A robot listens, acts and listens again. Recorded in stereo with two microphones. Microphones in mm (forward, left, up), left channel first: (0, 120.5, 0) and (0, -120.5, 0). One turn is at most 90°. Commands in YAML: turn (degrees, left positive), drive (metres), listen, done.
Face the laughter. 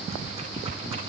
listen: true
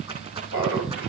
turn: -60
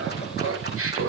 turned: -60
turn: -65
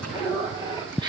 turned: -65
turn: -20
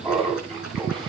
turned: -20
done: "Facing the laughter."